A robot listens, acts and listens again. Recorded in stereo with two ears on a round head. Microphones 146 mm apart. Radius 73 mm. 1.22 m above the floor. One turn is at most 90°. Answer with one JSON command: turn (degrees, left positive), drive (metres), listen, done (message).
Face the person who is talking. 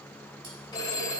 {"listen": true}
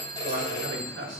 {"turn": -90}
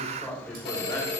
{"turn": 15}
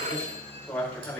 {"turn": 10}
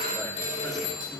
{"listen": true}
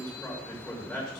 {"done": "Facing the man speaking, over 4 m away."}